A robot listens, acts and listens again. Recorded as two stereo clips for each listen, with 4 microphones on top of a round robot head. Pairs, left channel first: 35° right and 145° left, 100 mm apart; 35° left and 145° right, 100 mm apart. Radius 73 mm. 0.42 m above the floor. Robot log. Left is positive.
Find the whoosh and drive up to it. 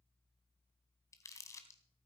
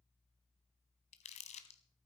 cmd idle
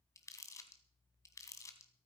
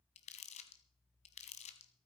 cmd idle
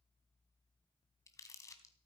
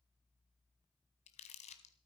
end: I can't make out a whoosh, only crumpling.